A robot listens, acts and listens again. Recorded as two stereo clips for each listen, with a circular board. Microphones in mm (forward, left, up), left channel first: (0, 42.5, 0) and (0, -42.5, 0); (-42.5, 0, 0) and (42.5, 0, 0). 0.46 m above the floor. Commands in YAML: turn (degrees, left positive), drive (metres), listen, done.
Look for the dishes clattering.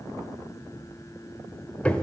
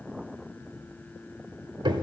listen: true
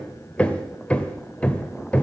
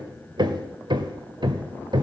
listen: true
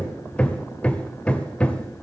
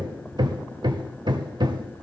done: "I can't make out dishes clattering to turn to."